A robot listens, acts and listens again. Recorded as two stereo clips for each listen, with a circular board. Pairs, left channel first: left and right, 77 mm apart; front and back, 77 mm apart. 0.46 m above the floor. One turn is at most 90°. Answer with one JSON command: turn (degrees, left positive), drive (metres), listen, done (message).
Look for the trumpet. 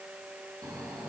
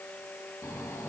{"listen": true}
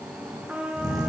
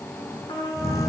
{"turn": -15}
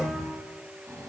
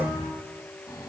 {"listen": true}
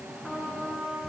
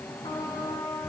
{"done": "Found it: a trumpet, straight ahead."}